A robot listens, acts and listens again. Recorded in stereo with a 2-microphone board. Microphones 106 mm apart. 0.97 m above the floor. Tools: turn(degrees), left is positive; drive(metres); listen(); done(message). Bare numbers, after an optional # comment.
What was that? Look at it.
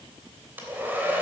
# The hair dryer: about 15° right or 165° right.
turn(-15)
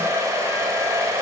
# So it is at 150° right.
turn(-150)
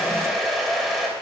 done("Facing the hair dryer.")